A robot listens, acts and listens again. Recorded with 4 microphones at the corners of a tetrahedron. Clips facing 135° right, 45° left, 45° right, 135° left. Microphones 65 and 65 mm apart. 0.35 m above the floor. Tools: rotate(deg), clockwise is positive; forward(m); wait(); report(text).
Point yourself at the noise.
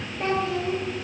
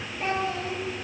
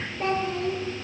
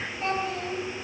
rotate(100)
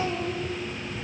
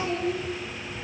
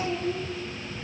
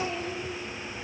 rotate(-10)
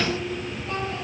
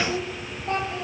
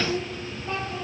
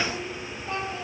rotate(10)
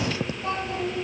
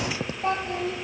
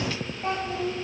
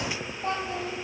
report("Found it: a child speaking, straight ahead, over 4 m away.")